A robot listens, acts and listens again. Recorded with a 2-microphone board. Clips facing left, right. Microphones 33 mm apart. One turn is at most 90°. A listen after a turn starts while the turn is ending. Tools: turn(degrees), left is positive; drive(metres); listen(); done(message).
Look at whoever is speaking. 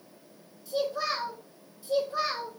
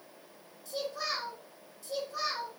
turn(degrees=25)
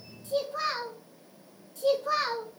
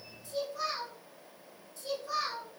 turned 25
turn(degrees=90)
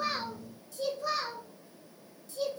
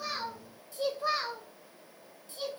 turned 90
turn(degrees=-25)
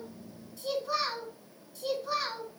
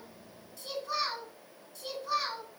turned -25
turn(degrees=10)
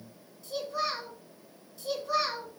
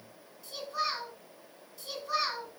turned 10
done("Found it: a child speaking, straight ahead.")